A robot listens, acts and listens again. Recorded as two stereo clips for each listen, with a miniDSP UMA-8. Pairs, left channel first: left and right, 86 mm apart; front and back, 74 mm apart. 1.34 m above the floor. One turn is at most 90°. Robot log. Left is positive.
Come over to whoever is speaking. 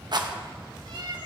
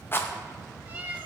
cmd idle
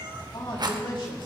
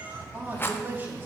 note: The man speaking: 120° left.
cmd yaw +90
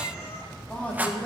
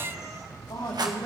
note: The man speaking is now 15° left.
cmd yaw +15
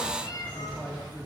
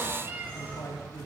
cmd fwd 1.0
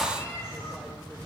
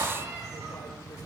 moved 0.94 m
cmd idle
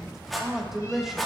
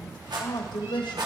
cmd fwd 1.0
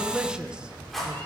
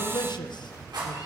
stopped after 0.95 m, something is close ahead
note: The man speaking is now 10° right.
cmd yaw -10
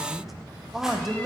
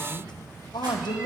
end: Arrived at the man speaking, straight ahead.